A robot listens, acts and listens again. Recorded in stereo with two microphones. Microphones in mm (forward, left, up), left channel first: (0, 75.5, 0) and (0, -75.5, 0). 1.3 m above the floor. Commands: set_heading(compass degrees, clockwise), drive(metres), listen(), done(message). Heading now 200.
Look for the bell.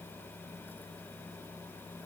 listen()
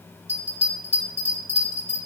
set_heading(250)
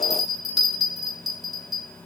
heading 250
done("Facing the bell, 2 to 4 m away.")